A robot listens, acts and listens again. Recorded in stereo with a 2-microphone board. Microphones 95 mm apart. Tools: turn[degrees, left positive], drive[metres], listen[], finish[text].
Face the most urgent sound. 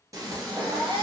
Action: turn[-90]
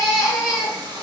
Action: finish[Facing the baby crying.]